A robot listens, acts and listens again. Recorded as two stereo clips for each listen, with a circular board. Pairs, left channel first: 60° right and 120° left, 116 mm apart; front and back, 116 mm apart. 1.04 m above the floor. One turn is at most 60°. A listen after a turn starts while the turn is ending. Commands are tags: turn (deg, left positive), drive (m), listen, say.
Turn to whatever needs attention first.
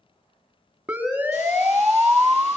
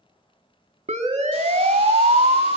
<turn deg="-60"/>
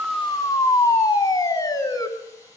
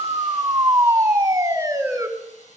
<turn deg="-60"/>
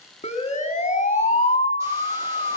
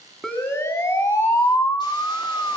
<turn deg="-60"/>
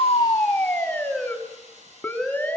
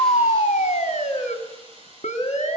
<turn deg="20"/>
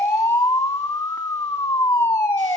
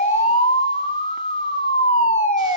<say>Facing the siren, 2 to 4 m away.</say>